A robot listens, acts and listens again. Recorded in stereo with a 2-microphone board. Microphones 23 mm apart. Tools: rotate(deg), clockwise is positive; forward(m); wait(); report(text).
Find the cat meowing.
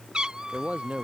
rotate(35)
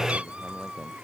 rotate(110)
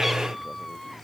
report("Found it: a cat meowing, straight ahead.")